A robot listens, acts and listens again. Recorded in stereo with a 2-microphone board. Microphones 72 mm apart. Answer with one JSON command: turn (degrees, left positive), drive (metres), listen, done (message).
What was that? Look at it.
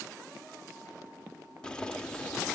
{"turn": 30}
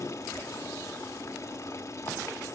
{"turn": 140}
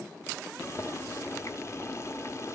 {"turn": 40}
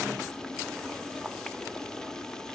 {"turn": 10}
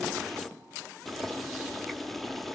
{"done": "Found it: boiling, straight ahead, under 1 m away."}